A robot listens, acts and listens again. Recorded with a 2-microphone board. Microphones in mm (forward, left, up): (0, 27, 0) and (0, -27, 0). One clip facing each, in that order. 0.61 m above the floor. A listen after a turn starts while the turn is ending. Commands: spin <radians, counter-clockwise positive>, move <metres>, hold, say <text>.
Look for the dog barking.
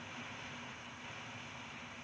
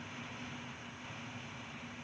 hold
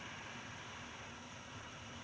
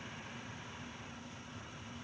hold
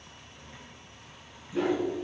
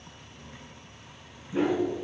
spin -0.35
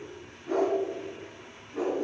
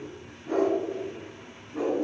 say Facing the dog barking, 2 to 4 m away.